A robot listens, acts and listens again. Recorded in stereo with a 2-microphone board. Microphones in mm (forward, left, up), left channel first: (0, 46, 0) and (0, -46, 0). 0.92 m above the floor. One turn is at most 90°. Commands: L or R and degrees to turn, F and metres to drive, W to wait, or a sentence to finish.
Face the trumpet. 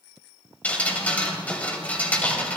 W
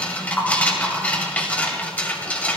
W
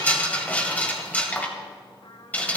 L60
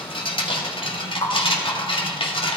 W
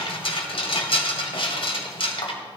W
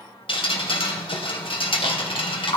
I heard a trumpet, but can't make it out now. It was about straight ahead or 60° left.